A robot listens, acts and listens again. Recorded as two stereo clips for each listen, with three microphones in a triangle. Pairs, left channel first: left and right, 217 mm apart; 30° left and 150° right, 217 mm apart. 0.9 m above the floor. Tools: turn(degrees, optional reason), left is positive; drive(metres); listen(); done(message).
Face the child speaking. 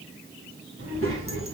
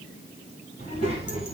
turn(degrees=-85, reason="The child speaking: 85° right.")
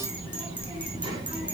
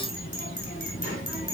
turn(degrees=-20, reason="The child speaking is now 20° right.")
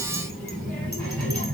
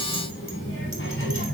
done("Found it: a child speaking, straight ahead.")